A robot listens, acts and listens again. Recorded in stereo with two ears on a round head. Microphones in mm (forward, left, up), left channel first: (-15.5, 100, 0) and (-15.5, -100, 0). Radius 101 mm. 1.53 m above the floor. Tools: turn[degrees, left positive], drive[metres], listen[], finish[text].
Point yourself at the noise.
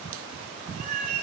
Thought: The cat meowing: about 35° right or 145° right.
Action: turn[-35]
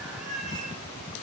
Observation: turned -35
Action: finish[Facing the cat meowing.]